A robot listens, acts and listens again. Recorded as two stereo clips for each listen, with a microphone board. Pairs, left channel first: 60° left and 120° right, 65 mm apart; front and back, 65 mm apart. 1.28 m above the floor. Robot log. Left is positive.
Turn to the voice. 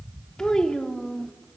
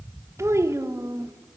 note: The child speaking: 140° left.
cmd yaw +140
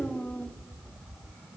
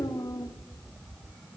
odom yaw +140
end: Facing the child speaking.